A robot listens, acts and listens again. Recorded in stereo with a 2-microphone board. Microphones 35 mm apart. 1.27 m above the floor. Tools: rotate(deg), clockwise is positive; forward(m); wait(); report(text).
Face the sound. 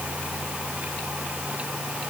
wait()
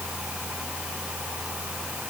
wait()
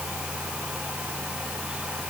report("I can't make out anything to turn to.")